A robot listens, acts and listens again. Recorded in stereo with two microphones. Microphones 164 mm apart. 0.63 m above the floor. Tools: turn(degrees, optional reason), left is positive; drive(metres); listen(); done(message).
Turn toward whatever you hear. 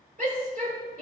turn(degrees=-60, reason="The shout: about 60° right or 120° right.")
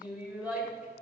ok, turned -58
turn(degrees=-10, reason="So it is at 10° right.")
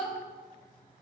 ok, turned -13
done("Found it: a shout, straight ahead.")